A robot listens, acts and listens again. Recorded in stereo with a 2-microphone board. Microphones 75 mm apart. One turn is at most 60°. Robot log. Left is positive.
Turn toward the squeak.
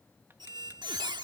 note: The squeak: about 70° right or 110° right.
cmd yaw -60
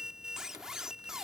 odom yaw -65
end: Facing the squeak.